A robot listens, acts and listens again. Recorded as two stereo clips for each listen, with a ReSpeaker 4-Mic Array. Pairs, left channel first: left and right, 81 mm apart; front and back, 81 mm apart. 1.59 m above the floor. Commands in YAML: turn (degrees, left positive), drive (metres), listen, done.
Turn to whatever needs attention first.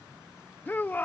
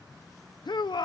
turn: 20
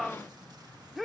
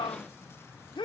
done: "Facing the shout."